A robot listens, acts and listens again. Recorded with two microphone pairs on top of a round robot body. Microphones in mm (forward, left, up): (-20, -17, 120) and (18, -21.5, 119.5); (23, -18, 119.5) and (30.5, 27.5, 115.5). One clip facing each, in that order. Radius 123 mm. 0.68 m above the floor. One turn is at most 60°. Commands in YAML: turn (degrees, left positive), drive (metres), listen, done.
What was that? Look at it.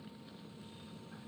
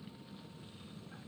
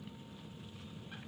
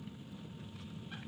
listen: true
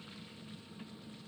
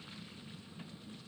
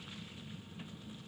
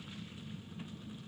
listen: true
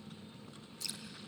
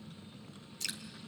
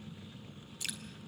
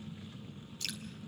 turn: -25
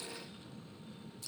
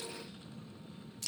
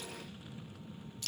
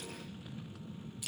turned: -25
done: "Facing the dripping, 2 to 4 m away."